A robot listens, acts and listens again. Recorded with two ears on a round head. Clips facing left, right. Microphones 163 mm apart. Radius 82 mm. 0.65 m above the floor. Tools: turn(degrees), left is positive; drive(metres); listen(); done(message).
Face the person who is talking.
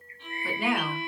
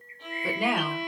turn(degrees=-60)
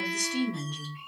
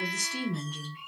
turn(degrees=-10)
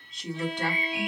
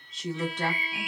done("Found it: a woman speaking, straight ahead.")